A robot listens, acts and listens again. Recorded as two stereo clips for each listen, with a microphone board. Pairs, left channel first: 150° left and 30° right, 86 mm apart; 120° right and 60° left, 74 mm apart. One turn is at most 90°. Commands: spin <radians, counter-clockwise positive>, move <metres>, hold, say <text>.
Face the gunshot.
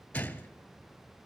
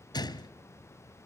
spin -1.57
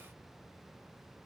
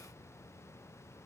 spin -0.79
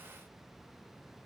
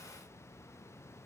say Facing where the gunshot came from. I can't hear it now.